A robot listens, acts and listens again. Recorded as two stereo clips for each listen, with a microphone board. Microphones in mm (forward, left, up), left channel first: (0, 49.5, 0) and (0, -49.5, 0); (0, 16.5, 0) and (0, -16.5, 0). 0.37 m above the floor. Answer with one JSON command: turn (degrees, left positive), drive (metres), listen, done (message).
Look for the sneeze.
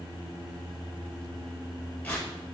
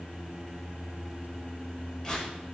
{"listen": true}
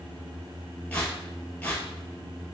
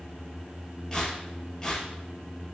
{"listen": true}
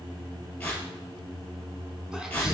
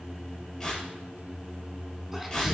{"turn": -30}
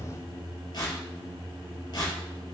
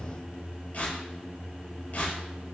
{"listen": true}
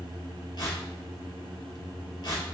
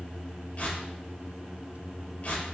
{"done": "I heard a sneeze, but can't make it out now. It was about 25° left or 145° right."}